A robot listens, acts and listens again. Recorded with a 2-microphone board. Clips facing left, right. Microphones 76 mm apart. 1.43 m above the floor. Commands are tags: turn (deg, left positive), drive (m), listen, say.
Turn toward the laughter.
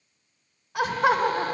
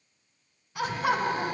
<turn deg="90"/>
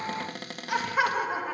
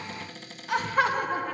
<turn deg="10"/>
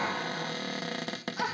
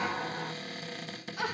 <turn deg="20"/>
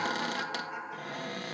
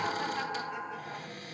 <turn deg="10"/>
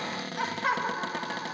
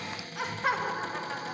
<say>Facing the laughter, 2 to 4 m away.</say>